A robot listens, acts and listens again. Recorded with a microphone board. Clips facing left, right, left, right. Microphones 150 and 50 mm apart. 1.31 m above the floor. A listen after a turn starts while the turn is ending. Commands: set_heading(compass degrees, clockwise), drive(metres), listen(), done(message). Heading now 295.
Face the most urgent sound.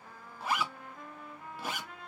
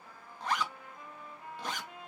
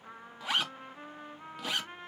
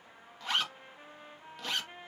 listen()
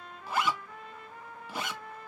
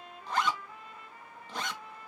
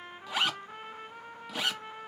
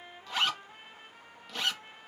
listen()
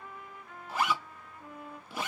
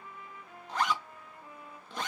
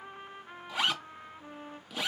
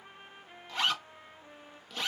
done("I can't make out anything urgent, only a trumpet and a zipper.")